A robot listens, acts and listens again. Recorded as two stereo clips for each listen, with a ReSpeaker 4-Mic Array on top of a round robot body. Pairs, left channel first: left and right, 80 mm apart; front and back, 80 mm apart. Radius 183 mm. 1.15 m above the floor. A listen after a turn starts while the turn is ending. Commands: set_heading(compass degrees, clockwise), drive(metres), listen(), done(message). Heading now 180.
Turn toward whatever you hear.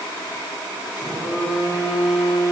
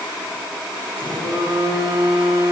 set_heading(320)
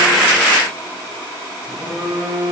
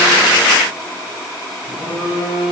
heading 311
set_heading(321)
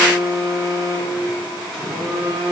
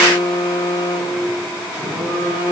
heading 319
done("Facing the phone buzzing, over 4 m away.")